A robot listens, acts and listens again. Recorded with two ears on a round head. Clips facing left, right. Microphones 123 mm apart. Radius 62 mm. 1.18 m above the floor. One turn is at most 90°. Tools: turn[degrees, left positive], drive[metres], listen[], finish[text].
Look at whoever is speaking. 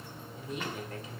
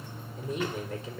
Action: turn[-90]
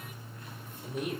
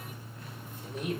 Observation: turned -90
Action: finish[Facing the woman speaking.]